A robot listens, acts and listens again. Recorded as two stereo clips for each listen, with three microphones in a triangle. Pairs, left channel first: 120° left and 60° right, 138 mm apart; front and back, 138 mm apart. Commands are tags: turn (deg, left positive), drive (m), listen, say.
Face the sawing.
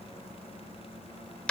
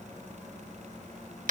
<listen/>
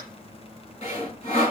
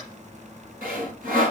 <turn deg="165"/>
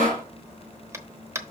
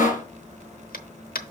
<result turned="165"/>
<turn deg="-30"/>
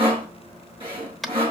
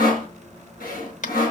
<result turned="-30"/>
<turn deg="-10"/>
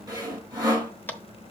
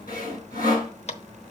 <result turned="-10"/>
<say>Found it: sawing, straight ahead, over 4 m away.</say>